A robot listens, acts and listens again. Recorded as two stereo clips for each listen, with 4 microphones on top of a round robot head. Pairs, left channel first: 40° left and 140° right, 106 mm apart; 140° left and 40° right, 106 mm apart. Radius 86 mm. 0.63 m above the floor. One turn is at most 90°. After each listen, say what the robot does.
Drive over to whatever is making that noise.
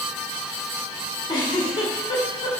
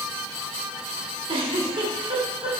Drive 1.0 m forward.
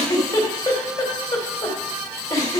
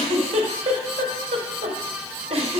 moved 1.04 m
Turn 15° right.
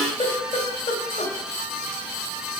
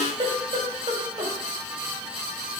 Drive 1.0 m forward.
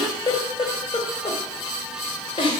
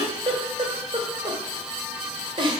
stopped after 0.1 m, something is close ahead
I am next to the giggle.